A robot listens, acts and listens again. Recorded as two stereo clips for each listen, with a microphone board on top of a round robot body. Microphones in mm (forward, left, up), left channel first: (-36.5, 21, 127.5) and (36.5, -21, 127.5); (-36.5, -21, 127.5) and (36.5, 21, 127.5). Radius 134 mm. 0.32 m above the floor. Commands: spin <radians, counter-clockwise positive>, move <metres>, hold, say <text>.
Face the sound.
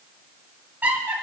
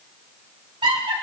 spin 0.70
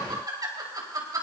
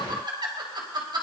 spin 0.17
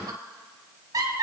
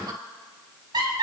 spin 0.17
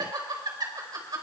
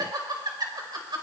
say Found it: laughter, straight ahead.